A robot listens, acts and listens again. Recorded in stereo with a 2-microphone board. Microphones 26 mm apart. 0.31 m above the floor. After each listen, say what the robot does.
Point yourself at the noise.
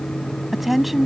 Turn 30° right.
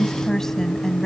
Turn 20° left.
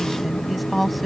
Facing the woman speaking.